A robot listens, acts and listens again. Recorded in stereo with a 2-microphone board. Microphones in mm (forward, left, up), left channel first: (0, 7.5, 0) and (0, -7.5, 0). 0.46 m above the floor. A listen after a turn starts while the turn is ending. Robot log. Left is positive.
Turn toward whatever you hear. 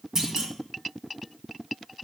note: The clunk: about 30° right or 150° right.
cmd yaw -30
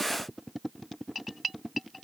cmd idle
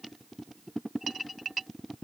end: I heard a clunk, but can't make it out now. It was about straight ahead or 120° right.